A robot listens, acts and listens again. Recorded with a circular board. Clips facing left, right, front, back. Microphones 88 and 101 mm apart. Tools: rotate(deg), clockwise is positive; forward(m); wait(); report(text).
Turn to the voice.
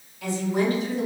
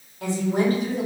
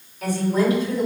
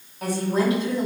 rotate(120)
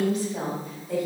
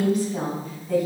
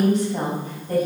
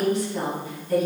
rotate(45)
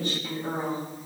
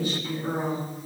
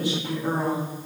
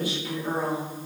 report("Facing the woman speaking, 2 to 4 m away.")